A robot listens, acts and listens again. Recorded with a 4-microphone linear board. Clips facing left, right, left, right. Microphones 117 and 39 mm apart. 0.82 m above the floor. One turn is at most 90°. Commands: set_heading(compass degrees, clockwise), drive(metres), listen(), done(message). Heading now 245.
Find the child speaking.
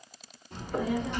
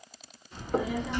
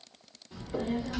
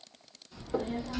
set_heading(190)
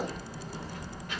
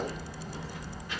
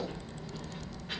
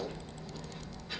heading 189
set_heading(124)
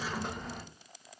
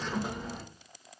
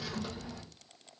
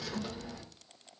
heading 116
done("Facing the child speaking.")